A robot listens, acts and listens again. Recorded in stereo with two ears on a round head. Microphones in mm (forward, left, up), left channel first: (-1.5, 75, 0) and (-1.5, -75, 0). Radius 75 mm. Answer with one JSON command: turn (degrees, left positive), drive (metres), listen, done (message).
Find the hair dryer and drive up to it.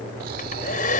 {"turn": 50}
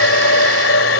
{"turn": 85}
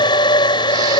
{"turn": 25}
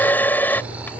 {"turn": 10}
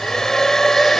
{"drive": 1.0}
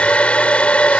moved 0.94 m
{"drive": 1.0}
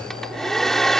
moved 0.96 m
{"drive": 1.0}
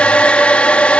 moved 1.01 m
{"drive": 1.0}
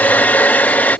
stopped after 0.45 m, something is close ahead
{"turn": 10}
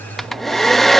{"done": "Arrived at the hair dryer, straight ahead."}